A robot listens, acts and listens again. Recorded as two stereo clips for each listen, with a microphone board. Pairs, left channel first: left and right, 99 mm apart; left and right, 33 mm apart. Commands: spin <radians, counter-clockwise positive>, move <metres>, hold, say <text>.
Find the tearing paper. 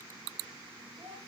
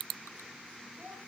hold
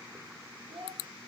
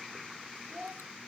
hold
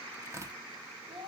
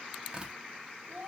spin -0.52
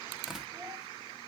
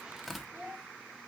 say Facing the tearing paper, under 1 m away.